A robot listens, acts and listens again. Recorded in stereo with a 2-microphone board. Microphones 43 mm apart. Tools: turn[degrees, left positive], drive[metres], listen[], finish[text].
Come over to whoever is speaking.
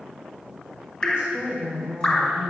Thought: The woman speaking: about 30° right or 150° right.
Action: turn[-30]
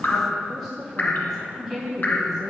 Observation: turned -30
Action: drive[1.0]
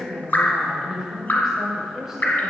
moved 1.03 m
Thought: The woman speaking is now 15° right.
Action: turn[-15]
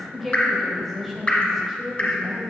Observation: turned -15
Action: drive[1.0]
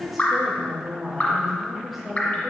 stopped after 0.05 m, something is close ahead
Action: finish[I am next to the woman speaking.]